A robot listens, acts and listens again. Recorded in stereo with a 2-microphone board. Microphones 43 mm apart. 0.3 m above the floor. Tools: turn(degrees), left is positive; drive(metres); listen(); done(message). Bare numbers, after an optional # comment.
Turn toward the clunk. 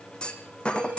# The clunk: about 20° left or 160° left.
turn(20)
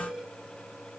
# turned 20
listen()
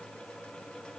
done("I heard a clunk, but can't make it out now. It was about straight ahead or 140° left.")